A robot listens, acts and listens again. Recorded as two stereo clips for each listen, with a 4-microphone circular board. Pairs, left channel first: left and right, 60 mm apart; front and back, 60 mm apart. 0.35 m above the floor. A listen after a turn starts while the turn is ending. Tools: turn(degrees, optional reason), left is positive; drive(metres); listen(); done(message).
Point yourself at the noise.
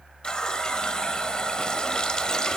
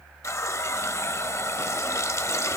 turn(degrees=15, reason="The running tap: 15° left.")
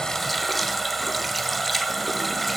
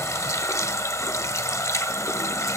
done("Found it: a running tap, straight ahead.")